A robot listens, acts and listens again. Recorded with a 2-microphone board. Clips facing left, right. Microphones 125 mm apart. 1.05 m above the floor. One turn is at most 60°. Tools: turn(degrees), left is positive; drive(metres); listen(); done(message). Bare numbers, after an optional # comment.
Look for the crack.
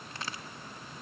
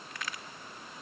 # The crack: about 30° left or 150° left.
turn(30)
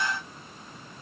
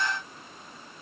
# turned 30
listen()
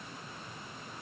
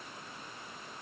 done("I heard a crack, but can't make it out now. It was about straight ahead or 120° left.")